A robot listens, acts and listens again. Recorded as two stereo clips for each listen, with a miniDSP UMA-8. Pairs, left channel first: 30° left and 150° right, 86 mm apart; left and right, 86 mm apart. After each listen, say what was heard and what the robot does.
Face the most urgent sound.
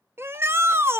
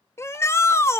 The shout: 150° left. Turn 150° left.
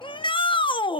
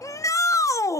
The shout is now 35° left. Turn 35° left.
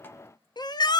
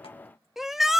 Found it: a shout, straight ahead, under 1 m away.